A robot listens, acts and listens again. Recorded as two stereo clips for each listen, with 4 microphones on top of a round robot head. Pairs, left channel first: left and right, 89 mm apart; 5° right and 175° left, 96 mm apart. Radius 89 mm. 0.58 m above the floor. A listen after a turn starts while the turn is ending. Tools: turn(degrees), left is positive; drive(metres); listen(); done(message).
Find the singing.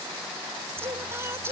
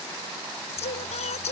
turn(degrees=-20)
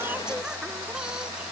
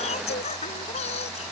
done("Found it: singing, straight ahead.")